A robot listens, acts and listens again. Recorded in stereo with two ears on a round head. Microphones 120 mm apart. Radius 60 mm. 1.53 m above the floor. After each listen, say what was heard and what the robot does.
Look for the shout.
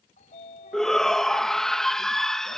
Turn 30° left.
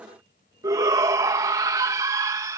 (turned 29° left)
So it is at 25° right. Turn 25° right.
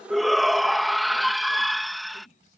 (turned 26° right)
Facing the shout.